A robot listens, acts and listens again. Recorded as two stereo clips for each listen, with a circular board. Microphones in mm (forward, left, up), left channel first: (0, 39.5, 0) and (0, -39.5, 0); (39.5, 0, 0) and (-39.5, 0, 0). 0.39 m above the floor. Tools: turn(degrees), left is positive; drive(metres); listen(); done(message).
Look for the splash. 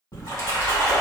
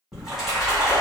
turn(degrees=100)
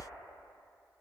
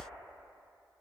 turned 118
turn(degrees=-20)
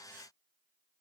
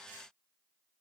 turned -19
done("I heard a splash from this way, but can't make it out now.")